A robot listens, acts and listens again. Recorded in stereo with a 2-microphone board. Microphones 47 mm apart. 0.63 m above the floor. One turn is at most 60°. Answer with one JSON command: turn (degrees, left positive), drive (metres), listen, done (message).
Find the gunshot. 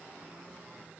{"listen": true}
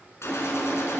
{"turn": 60}
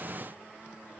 {"listen": true}
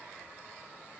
{"done": "I heard a gunshot, but can't make it out now. It was about 5° left or 55° left."}